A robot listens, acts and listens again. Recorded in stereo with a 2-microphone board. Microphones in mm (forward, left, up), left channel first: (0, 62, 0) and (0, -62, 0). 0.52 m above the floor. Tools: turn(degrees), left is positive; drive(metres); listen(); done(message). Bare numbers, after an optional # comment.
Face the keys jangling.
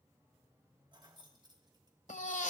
# The keys jangling: about 35° right or 145° right.
turn(-35)
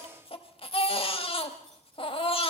listen()
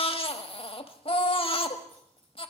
listen()
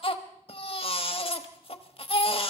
done("I heard keys jangling, but can't make it out now. It was about straight ahead or 110° right.")